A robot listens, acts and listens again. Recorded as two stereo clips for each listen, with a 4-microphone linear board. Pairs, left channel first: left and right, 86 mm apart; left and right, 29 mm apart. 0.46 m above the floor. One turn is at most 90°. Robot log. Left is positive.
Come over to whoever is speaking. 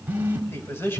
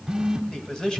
note: The man speaking: about 25° left or 155° left.
cmd yaw +25
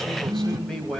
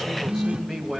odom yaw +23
cmd fwd 1.0
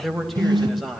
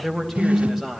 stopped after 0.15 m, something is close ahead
end: Something is in my way. I am facing the man speaking but have not reached it.